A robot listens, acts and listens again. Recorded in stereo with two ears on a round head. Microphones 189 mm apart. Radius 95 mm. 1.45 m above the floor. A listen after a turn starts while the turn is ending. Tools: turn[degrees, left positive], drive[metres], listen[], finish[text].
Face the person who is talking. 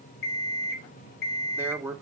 Action: turn[-30]
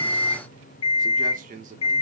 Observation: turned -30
Thought: So it is at 140° right.
Action: turn[-140]
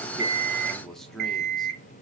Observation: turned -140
Action: finish[Facing the man speaking, 1 to 2 m away.]